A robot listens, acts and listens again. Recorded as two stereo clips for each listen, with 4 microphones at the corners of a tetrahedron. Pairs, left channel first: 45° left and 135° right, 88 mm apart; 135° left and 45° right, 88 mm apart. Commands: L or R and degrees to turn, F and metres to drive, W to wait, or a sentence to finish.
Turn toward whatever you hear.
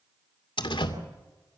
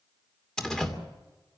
L50
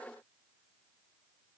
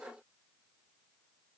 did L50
I heard a door slam from this way, but can't make it out now.